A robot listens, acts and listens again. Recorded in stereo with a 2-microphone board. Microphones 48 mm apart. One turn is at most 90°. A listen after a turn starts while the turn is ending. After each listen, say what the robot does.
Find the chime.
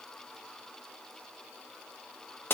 Keep listening.
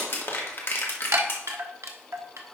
Turn 90° right.
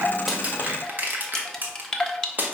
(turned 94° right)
Turn 10° left.
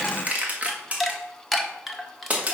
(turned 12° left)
Found it: a chime, straight ahead.